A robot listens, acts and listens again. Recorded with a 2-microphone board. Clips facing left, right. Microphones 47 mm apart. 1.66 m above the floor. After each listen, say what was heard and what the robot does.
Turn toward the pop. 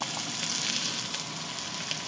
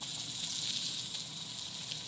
Keep listening.
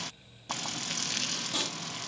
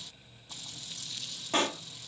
The pop: about 45° right or 135° right. Turn 45° right.
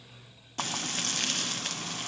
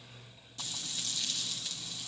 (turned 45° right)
Keep listening.
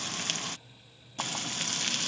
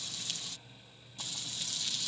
I heard a pop, but can't make it out now. It was about straight ahead or 90° right.